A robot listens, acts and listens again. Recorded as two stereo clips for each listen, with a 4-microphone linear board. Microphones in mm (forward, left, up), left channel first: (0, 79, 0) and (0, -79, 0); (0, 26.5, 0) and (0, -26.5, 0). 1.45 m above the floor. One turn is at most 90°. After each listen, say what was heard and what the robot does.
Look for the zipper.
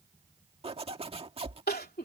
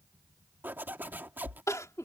The zipper: about 40° right or 140° right. Turn 40° right.
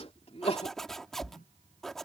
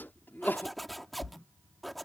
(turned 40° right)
Facing the zipper.